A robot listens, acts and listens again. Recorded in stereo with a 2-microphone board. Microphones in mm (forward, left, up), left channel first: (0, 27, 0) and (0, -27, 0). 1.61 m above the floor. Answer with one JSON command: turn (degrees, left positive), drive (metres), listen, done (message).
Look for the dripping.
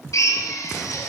{"listen": true}
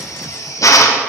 {"listen": true}
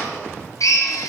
{"done": "I can't make out dripping to turn to."}